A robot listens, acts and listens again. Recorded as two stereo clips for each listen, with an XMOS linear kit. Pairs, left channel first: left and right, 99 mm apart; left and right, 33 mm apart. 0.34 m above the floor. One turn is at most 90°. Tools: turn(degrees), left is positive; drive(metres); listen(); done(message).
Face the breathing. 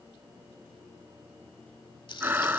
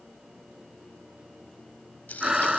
turn(degrees=-20)
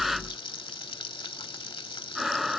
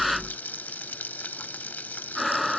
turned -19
done("Found it: breathing, straight ahead.")